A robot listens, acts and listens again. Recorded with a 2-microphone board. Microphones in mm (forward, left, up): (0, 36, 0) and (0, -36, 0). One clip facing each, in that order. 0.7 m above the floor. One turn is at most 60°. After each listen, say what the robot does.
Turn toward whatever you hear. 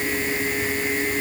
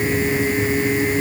Keep listening.
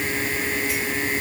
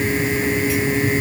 Keep listening.
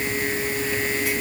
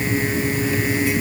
I can't make out anything to turn to.